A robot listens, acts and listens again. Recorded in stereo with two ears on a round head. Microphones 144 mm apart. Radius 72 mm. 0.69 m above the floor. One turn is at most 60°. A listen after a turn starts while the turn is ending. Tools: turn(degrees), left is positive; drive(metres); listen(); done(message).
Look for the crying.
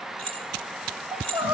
turn(degrees=-30)
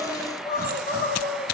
turn(degrees=15)
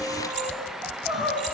done("Found it: crying, straight ahead, 2 to 4 m away.")